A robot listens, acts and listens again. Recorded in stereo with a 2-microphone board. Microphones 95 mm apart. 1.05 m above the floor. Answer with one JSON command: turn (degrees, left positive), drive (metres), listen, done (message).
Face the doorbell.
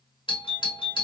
{"turn": 60}
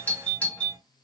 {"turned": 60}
{"turn": 15}
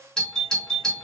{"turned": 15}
{"done": "Found it: a doorbell, straight ahead."}